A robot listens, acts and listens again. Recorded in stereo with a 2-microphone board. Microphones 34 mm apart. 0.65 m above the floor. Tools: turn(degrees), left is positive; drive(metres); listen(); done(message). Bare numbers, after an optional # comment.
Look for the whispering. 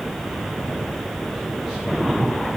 listen()
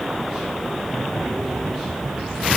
listen()
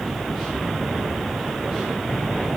done("I can't make out whispering to turn to.")